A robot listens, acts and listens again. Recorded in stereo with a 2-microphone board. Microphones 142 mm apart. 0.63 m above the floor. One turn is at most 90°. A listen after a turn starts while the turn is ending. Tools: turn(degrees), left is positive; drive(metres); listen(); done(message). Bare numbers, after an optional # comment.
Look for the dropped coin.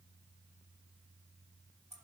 listen()
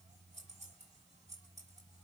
listen()
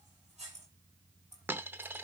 turn(-30)
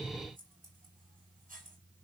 listen()
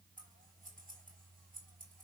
done("I heard a dropped coin, but can't make it out now. It was about 15° left or 135° right.")